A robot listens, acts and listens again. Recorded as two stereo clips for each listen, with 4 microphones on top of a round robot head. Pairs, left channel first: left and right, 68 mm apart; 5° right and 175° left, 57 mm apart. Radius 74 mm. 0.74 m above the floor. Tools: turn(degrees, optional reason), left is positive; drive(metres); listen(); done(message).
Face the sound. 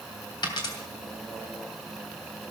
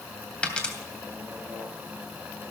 turn(degrees=65, reason="The dropped coin: 65° left.")
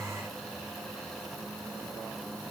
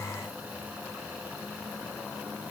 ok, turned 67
done("Facing where the dropped coin came from. I can't hear it now.")